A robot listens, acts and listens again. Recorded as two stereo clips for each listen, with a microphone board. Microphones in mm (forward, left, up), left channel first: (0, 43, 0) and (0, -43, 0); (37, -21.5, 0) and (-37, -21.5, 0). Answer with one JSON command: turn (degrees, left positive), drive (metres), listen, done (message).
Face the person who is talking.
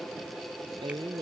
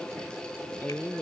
{"turn": -70}
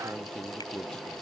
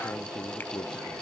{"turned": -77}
{"turn": 10}
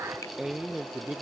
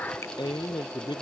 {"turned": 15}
{"done": "Found it: a man speaking, straight ahead."}